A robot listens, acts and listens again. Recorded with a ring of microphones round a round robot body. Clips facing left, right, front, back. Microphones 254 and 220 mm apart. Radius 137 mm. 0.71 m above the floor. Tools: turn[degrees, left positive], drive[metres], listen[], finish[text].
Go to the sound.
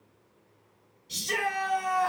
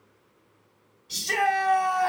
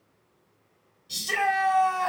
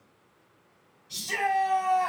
Action: drive[1.0]
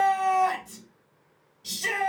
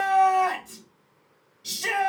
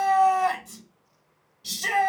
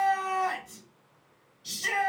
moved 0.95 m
Action: drive[1.0]
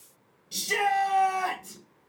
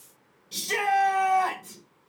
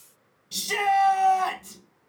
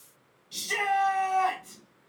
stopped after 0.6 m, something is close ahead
Action: finish[Arrived at the shout, straight ahead.]